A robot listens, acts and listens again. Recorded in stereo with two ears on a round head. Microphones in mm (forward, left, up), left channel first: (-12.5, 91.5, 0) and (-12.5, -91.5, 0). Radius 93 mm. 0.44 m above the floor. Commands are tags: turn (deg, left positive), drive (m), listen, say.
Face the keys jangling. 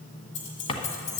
<turn deg="75"/>
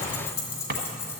<turn deg="15"/>
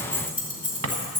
<turn deg="-10"/>
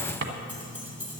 <turn deg="-10"/>
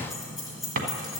<say>Facing the keys jangling, 2 to 4 m away.</say>